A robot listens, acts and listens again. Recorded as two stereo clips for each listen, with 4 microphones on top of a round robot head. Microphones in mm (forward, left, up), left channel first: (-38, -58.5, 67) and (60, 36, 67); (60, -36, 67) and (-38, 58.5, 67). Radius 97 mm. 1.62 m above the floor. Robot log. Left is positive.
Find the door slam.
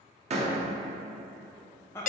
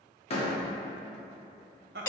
end: Found it: a door slam, straight ahead, 1 to 2 m away.